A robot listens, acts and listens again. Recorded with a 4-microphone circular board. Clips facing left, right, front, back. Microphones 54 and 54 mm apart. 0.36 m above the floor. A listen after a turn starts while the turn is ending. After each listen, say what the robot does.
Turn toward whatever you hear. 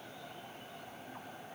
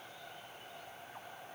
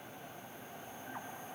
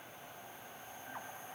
Keep listening.
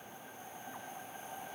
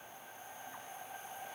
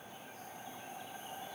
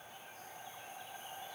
Keep listening.
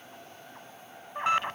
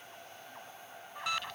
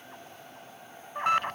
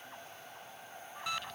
Turn 35° left.
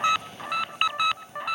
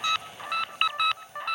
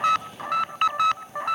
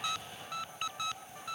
Facing the alarm.